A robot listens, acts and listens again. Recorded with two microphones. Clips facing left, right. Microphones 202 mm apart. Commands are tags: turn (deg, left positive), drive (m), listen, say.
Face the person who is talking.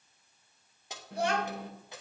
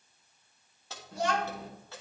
<turn deg="60"/>
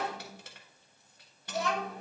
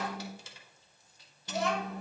<say>Found it: a child speaking, straight ahead.</say>